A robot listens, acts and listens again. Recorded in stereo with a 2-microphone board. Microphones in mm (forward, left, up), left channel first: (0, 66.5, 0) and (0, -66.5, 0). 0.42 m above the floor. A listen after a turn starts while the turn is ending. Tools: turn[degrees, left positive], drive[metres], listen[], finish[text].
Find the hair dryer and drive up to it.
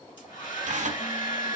Thought: The hair dryer: about 35° left or 145° left.
Action: turn[35]
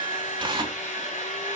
Thought: So it is at 110° left.
Action: turn[110]
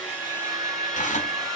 Action: drive[1.0]
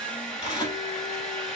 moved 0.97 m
Action: drive[1.0]
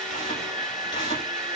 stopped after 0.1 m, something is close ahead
Action: finish[Arrived at the hair dryer, straight ahead.]